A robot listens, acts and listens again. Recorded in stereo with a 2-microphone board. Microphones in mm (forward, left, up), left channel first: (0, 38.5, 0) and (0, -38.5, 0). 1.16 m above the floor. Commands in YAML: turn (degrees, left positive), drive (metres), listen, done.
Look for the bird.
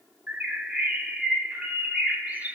turn: -15
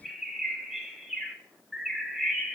done: "Facing the bird, under 1 m away."